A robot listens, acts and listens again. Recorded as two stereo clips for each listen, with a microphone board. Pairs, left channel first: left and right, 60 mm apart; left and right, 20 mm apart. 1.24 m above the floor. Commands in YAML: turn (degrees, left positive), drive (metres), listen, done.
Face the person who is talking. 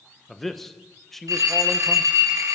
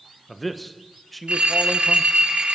turn: 30
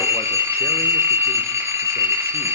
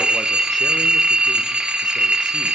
listen: true
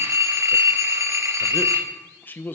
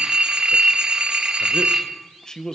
turn: 145
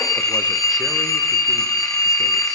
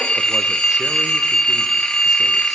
listen: true
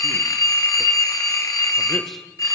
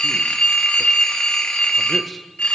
listen: true
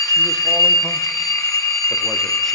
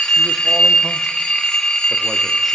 done: "I heard a man speaking from this way, but can't make it out now."